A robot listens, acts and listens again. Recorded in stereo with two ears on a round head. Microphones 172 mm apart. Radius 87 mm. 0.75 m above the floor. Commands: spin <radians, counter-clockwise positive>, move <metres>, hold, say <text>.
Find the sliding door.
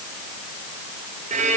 hold
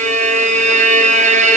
hold
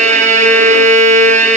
say I can't make out a sliding door, only a violin.